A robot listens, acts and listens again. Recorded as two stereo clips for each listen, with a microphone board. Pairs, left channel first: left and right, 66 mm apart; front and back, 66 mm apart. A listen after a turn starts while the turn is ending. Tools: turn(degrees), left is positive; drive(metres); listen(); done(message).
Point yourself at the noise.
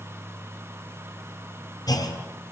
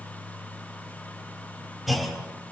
turn(degrees=90)
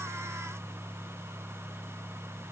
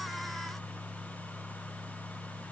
done("Facing where the clunk came from. I can't hear it now.")